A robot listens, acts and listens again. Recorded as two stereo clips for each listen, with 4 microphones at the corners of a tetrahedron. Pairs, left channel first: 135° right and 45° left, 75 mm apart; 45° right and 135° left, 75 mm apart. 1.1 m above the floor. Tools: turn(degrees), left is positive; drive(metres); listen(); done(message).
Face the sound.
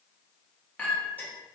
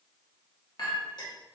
turn(degrees=-65)
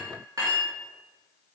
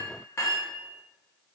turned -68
done("Found it: a clink, straight ahead, 1 to 2 m away.")